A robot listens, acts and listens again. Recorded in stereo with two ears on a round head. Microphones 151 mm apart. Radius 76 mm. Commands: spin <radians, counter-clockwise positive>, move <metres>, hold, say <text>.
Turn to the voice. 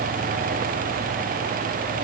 hold
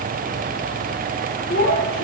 spin 0.96
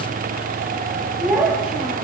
say Found it: a child speaking, straight ahead.